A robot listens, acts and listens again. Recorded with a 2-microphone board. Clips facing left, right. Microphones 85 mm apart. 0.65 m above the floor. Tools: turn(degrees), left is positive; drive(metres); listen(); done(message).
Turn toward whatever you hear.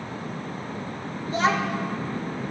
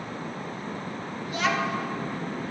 turn(degrees=30)
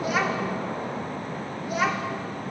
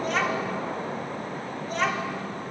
turn(degrees=10)
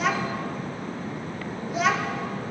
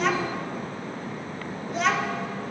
done("Found it: a child speaking, straight ahead.")